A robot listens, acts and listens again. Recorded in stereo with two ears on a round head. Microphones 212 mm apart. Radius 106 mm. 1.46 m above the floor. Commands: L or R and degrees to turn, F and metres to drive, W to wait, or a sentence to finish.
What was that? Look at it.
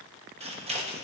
R25
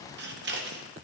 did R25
R125
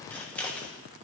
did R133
Facing the scissors.